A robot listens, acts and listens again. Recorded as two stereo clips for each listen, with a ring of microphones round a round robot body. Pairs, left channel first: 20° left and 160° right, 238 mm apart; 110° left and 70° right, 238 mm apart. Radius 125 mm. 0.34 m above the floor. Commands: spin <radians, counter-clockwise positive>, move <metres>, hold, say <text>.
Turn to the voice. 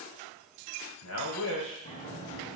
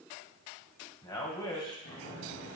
spin 0.70
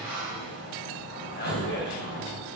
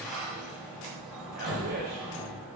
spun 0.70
hold
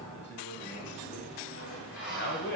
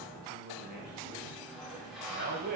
spin -0.35
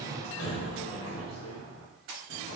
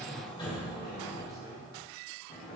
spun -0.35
hold
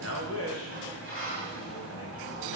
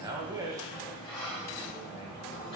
say Found it: a man speaking, straight ahead.